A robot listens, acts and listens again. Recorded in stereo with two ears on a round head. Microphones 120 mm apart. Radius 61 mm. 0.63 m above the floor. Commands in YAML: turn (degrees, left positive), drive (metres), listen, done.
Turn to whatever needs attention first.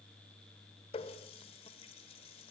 listen: true
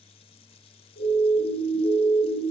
turn: 90
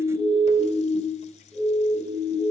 done: "Facing the siren, over 4 m away."